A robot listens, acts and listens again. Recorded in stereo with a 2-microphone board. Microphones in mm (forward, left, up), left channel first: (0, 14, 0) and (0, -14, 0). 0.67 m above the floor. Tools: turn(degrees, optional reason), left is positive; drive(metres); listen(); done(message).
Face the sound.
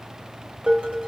turn(degrees=-45, reason="The dishes clattering: about 45° right or 135° right.")
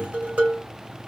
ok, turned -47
turn(degrees=-85, reason="So it is at 85° right.")
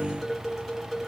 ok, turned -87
done("Found it: dishes clattering, straight ahead, 1 to 2 m away.")